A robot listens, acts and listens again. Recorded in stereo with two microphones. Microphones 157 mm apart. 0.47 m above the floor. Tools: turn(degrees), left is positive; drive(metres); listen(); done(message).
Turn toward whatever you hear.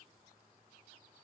listen()
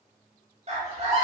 turn(degrees=-45)
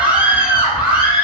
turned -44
turn(degrees=-10)
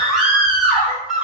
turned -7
done("Found it: a scream, straight ahead, 1 to 2 m away.")